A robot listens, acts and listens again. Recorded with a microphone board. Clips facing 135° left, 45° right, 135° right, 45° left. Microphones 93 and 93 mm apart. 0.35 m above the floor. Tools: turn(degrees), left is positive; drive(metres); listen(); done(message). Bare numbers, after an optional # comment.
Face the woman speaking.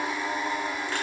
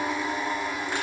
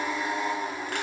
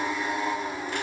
listen()
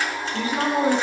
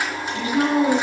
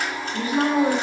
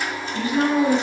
# The woman speaking: 175° right.
turn(-175)
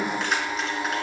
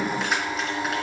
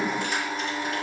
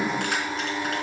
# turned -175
listen()
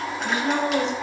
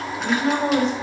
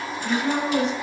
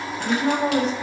done("Facing the woman speaking, 2 to 4 m away.")